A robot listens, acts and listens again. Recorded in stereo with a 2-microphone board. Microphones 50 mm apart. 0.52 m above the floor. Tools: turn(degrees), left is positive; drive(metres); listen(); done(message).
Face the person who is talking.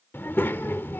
turn(degrees=45)
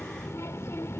turn(degrees=80)
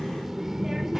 done("Found it: a child speaking, straight ahead, under 1 m away.")